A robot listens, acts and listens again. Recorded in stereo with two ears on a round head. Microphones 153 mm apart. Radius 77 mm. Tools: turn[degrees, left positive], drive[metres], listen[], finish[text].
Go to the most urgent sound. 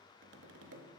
Action: listen[]
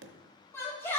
Action: turn[30]
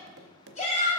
Thought: So it is at 135° left.
Action: turn[135]
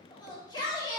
Thought: The shout is now 25° left.
Action: turn[25]
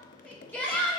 Thought: The shout is now 10° left.
Action: turn[10]
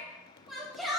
Action: drive[1.0]
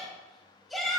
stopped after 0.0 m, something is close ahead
Action: finish[Something is in my way. I am facing the shout but have not reached it.]